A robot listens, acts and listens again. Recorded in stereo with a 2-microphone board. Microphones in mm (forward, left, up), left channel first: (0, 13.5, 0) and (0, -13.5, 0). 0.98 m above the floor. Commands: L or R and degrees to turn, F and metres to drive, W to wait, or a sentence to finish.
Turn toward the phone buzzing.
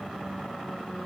W
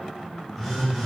R30
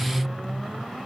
W
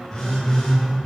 L20
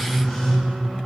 Facing the phone buzzing, 2 to 4 m away.